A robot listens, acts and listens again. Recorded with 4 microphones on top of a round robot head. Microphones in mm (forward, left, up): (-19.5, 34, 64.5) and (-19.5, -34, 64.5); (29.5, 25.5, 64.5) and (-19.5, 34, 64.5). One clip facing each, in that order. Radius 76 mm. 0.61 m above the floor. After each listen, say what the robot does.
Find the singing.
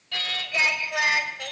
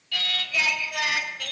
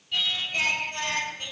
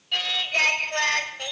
Turn 150° left.
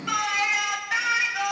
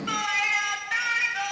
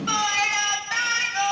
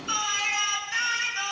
Facing the singing.